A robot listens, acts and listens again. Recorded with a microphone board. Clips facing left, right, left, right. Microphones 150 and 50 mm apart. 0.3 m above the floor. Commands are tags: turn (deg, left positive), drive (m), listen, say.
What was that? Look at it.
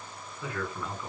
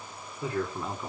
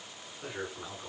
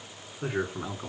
<turn deg="-30"/>
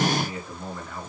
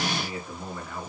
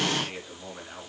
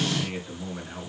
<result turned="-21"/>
<say>Facing the man speaking.</say>